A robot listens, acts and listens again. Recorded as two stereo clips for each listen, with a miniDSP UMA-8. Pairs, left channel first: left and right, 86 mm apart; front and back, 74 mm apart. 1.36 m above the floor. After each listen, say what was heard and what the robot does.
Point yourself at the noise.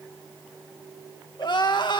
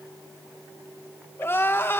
The crying: 60° left. Turn 60° left.
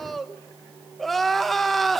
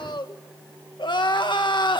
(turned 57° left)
Facing the crying, 1 to 2 m away.